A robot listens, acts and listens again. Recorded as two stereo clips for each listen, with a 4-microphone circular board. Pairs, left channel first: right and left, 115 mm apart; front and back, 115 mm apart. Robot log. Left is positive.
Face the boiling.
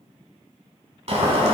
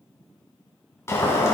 note: The boiling: 65° left.
cmd yaw +65
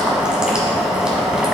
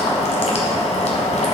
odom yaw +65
end: Found it: boiling, straight ahead, 1 to 2 m away.